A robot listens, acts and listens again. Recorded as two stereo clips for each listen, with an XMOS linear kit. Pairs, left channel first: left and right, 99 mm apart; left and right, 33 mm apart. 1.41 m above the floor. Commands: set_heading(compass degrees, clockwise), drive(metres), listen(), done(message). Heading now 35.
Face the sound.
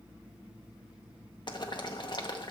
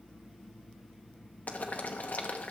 set_heading(345)
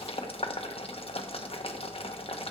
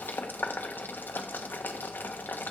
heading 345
set_heading(270)
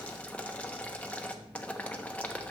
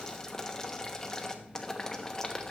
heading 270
set_heading(260)
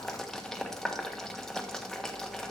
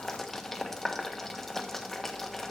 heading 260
done("Facing the boiling, 1 to 2 m away.")